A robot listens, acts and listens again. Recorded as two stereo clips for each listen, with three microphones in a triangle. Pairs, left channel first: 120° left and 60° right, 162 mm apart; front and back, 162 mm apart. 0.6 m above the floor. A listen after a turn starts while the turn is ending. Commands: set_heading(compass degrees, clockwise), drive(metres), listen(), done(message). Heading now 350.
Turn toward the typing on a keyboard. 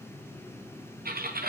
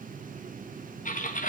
set_heading(25)
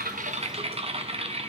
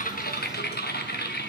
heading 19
done("Facing the typing on a keyboard.")